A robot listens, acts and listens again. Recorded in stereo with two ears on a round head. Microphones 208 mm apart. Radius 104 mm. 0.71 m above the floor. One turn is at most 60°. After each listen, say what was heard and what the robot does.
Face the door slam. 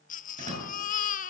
The door slam: about 30° right or 150° right. Turn 30° right.
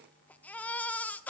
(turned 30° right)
Keep listening.
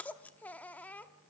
I heard a door slam, but can't make it out now. It was about straight ahead or 120° right.